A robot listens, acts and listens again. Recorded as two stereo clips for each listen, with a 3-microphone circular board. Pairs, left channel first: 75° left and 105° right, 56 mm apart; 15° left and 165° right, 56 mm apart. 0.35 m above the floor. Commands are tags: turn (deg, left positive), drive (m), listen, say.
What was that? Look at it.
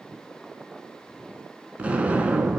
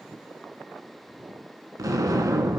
<turn deg="-170"/>
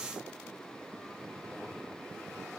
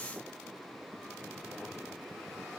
<say>Facing where the explosion came from. I can't hear it now.</say>